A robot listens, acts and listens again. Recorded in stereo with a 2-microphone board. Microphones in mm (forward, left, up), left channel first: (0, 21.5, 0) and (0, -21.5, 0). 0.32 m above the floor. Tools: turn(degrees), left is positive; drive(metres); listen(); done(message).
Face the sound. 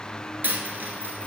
turn(degrees=-50)
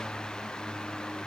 listen()
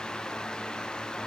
done("I heard a dropped coin, but can't make it out now. It was about straight ahead or 80° right.")